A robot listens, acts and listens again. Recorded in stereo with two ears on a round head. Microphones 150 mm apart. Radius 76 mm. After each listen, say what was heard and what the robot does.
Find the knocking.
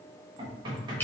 The knocking: about 30° right or 150° right. Turn 30° right.
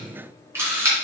Keep listening.
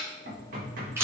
So it is at 120° right. Turn 120° right.
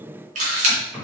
Facing the knocking.